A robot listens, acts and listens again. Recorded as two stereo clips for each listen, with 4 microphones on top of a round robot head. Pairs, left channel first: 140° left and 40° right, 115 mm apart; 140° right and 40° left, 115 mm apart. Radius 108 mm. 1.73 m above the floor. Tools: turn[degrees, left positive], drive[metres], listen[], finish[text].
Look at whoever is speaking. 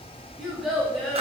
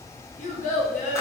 Thought: The child speaking: 130° right.
Action: turn[-130]
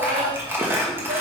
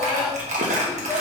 Action: listen[]
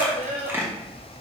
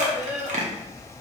Thought: The child speaking is now 40° right.
Action: turn[-40]
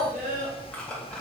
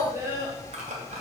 Thought: The child speaking is now 30° right.
Action: turn[-30]
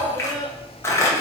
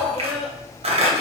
Thought: The child speaking is now 40° right.
Action: turn[-40]
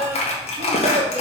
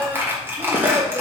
Thought: The child speaking is now 15° right.
Action: turn[-15]
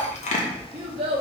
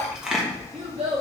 Action: finish[Found it: a child speaking, straight ahead.]